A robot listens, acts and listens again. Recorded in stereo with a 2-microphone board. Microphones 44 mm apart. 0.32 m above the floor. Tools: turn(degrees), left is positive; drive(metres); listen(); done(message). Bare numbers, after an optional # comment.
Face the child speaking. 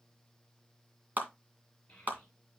# The child speaking: about 30° left or 150° left.
turn(30)
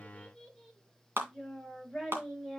# So it is at 10° left.
turn(10)
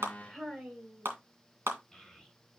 done("Found it: a child speaking, straight ahead, 2 to 4 m away.")